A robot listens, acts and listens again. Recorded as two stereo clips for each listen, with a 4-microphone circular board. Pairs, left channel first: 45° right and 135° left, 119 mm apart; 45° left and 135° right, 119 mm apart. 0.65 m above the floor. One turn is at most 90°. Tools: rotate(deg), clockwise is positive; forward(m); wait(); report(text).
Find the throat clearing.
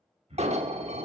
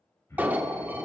rotate(-90)
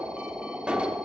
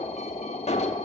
rotate(-20)
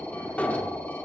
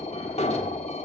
wait()
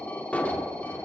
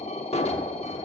report("I heard throat clearing from this way, but can't make it out now.")